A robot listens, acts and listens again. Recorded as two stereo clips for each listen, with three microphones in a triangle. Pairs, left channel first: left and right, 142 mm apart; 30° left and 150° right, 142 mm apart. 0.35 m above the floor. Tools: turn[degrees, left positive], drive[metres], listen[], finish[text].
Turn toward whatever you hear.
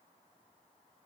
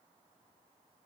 Action: listen[]
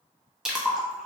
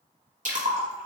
Thought: The splash: 175° right.
Action: turn[-175]
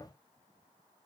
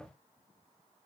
Action: finish[Facing where the splash came from. I can't hear it now.]